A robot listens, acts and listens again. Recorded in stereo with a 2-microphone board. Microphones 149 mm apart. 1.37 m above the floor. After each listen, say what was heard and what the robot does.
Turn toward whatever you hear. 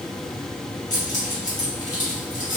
The keys jangling: about 65° left or 115° left. Turn 65° left.
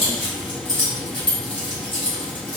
So it is at 40° left. Turn 40° left.
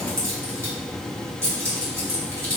The keys jangling is now 20° right. Turn 20° right.
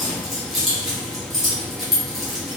Facing the keys jangling.